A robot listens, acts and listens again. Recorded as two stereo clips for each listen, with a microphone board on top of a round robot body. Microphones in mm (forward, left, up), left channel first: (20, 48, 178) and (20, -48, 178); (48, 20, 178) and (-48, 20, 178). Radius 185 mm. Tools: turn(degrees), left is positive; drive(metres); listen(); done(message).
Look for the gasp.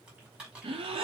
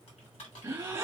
turn(degrees=-115)
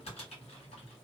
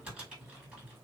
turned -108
done("Facing where the gasp came from. I can't hear it now.")